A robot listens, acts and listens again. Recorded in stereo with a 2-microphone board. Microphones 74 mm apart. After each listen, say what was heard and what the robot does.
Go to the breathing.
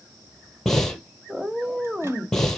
Turn 30° left.
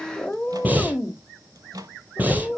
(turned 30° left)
So it is at 20° right. Turn 20° right.
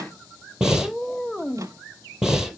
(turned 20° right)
Drive 1.0 m forward.
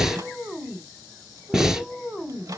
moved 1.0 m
Drive 1.0 m forward.
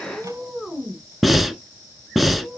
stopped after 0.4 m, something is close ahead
Arrived at the breathing, straight ahead.